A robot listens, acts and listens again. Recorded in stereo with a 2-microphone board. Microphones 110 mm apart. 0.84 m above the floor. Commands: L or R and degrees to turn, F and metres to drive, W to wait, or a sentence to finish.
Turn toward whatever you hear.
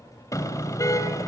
L30
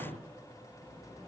W
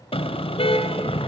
L120
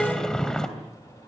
Facing the car horn, 2 to 4 m away.